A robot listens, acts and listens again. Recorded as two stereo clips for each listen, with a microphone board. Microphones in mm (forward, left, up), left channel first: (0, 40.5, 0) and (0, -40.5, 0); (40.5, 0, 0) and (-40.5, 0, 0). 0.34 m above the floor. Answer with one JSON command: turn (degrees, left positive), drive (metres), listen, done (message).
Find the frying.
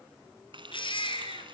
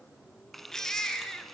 {"turn": -90}
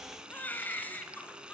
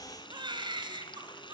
{"turn": -10}
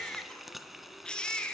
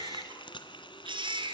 {"done": "Found it: frying, straight ahead."}